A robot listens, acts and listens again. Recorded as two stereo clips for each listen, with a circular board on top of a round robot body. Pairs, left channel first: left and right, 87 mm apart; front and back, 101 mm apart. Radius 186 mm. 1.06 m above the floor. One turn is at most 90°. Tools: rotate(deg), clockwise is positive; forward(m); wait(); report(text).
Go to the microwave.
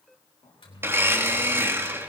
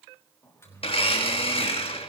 rotate(-65)
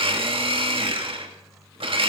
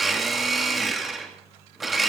forward(1.0)
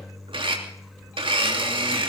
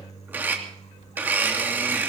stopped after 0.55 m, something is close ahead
report("Blocked. The microwave is further on, straight ahead.")